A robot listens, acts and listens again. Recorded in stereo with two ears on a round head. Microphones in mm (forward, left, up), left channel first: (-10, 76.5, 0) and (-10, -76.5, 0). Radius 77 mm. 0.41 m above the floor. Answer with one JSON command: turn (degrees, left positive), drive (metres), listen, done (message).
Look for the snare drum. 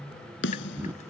{"turn": 90}
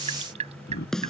{"done": "Facing the snare drum."}